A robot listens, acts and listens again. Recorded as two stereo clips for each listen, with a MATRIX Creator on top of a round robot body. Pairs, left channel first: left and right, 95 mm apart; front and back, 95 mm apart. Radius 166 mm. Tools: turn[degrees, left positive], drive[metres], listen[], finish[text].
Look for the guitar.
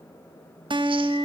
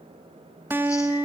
Thought: The guitar: 115° right.
Action: turn[-115]
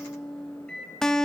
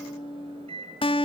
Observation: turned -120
Action: finish[Found it: a guitar, straight ahead.]